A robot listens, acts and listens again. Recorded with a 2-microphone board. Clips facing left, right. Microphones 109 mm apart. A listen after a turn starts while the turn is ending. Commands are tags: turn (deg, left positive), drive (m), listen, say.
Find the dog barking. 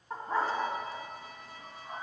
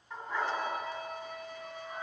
<turn deg="45"/>
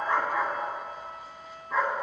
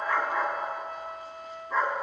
<say>Facing the dog barking.</say>